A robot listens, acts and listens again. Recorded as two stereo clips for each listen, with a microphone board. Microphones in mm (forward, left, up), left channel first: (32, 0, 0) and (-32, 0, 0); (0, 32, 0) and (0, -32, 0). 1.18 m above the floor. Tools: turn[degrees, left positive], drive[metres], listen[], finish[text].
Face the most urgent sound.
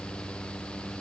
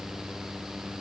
Action: listen[]
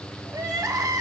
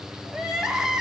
Thought: The crying: 170° right.
Action: turn[-170]
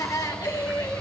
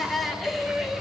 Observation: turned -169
Action: finish[Found it: crying, straight ahead.]